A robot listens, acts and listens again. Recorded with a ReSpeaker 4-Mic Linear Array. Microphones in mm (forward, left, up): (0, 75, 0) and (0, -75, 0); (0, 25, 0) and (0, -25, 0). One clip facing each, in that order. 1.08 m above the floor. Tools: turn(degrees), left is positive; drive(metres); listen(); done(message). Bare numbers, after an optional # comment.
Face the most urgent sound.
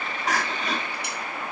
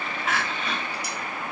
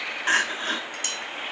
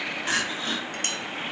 # The crying: about 35° left or 145° left.
turn(35)
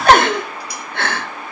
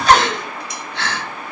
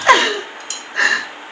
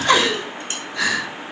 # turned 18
# So it is at 125° left.
turn(125)
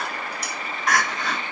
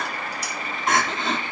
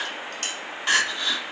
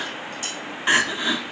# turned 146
# The crying is now 25° right.
turn(-25)
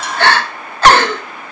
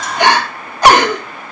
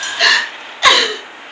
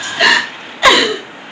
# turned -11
# The crying is now 15° right.
turn(-15)
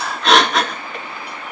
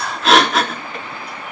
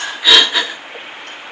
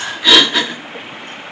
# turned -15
done("Facing the crying, 1 to 2 m away.")